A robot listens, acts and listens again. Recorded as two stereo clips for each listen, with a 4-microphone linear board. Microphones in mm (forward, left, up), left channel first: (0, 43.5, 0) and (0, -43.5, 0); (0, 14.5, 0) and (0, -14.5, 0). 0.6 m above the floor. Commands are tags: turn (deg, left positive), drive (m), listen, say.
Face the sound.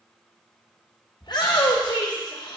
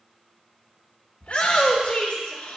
<turn deg="60"/>
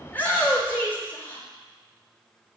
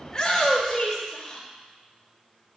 <turn deg="25"/>
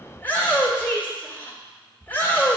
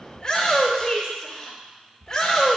<turn deg="25"/>
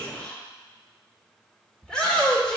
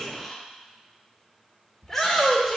<turn deg="10"/>
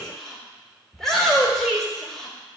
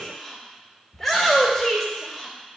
<say>Found it: a shout, straight ahead.</say>